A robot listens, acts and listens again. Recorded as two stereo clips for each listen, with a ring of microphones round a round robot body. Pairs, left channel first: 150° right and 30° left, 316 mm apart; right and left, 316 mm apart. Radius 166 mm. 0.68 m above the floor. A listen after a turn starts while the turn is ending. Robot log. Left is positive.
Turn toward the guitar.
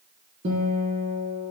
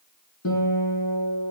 note: The guitar: 40° right.
cmd yaw -40
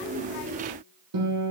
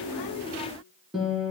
end: Found it: a guitar, straight ahead.